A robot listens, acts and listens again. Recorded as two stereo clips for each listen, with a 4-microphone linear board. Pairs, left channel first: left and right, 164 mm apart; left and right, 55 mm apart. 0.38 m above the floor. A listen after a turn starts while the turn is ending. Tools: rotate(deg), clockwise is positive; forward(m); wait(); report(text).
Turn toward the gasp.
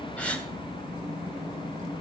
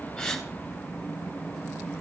rotate(-30)
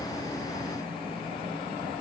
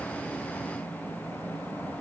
wait()
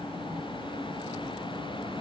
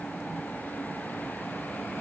report("I heard a gasp, but can't make it out now. It was about 20° right or 140° left.")